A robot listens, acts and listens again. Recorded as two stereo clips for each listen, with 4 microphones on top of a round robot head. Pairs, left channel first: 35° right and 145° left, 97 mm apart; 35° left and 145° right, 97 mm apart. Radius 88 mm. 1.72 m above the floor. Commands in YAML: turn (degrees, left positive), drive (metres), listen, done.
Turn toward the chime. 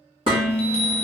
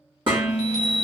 turn: -50
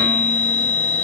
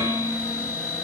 done: "Found it: a chime, straight ahead."